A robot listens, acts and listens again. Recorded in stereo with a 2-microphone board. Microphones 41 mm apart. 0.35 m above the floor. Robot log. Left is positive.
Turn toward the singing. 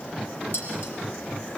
cmd idle
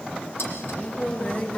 note: The singing: about 45° left or 135° left.
cmd yaw +45
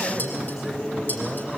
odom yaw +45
end: Found it: singing, straight ahead, over 4 m away.